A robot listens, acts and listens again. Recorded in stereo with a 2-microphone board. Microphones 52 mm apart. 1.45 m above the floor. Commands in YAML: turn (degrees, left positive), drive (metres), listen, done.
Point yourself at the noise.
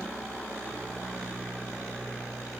listen: true
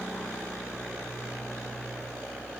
listen: true
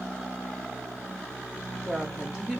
turn: -30
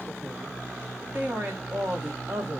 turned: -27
turn: -140
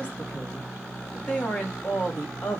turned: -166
turn: 25
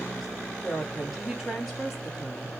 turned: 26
done: "Found it: a woman speaking, straight ahead, 2 to 4 m away."